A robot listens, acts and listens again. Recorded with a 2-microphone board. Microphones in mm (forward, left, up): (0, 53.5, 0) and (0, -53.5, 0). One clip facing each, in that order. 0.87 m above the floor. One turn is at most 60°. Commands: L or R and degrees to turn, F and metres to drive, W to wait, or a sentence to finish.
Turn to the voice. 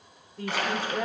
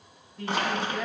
L40
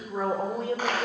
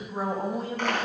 L60
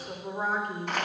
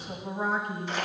L45
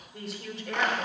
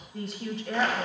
Facing the woman speaking.